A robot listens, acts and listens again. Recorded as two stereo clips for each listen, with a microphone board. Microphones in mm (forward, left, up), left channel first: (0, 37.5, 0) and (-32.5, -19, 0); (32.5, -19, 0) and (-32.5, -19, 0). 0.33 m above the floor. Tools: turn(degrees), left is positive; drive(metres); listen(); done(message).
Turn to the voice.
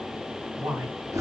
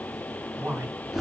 turn(degrees=-140)
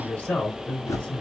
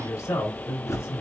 done("Found it: a man speaking, straight ahead.")